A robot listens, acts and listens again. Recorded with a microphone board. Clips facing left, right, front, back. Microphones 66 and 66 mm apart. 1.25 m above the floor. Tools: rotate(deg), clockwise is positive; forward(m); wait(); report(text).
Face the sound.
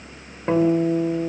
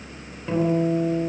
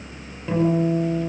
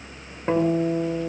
rotate(-135)
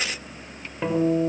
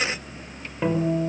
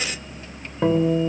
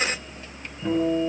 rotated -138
report("Facing the guitar, over 4 m away.")